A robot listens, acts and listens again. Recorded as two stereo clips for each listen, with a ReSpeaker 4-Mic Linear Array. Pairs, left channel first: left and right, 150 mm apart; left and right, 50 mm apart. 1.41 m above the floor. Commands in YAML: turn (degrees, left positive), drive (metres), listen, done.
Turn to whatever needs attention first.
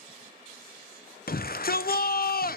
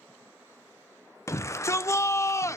turn: 90
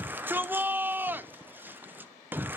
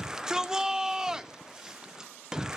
turn: -10
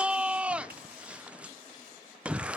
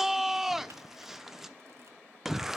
done: "Found it: a shout, straight ahead, under 1 m away."